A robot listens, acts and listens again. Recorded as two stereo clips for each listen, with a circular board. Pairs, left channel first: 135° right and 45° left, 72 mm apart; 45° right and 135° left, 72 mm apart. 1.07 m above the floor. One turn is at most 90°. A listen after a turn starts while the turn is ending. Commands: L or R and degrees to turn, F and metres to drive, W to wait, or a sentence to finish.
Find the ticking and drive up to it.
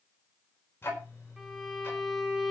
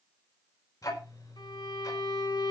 R80
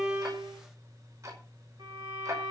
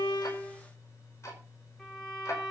F1.0
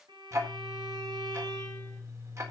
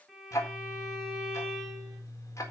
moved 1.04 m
F1.0
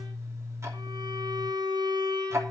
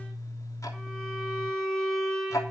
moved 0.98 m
F1.0
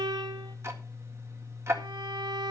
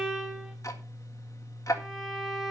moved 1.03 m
F1.0
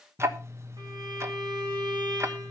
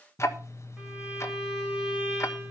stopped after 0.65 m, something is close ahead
I am next to the ticking.